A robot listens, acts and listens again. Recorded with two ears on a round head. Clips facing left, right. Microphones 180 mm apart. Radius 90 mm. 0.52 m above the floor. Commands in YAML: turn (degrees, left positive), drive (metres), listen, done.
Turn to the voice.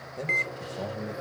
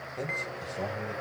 turn: 30
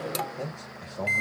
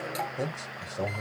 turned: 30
turn: -20
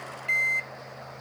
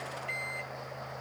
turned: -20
listen: true
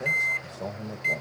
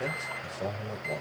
done: "Facing the man speaking."